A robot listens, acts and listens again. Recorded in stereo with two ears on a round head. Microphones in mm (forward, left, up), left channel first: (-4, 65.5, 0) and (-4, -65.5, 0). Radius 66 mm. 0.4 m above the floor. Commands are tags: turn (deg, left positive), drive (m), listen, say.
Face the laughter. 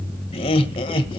<turn deg="40"/>
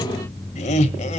<turn deg="130"/>
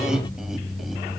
<listen/>
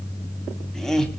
<say>Facing the laughter.</say>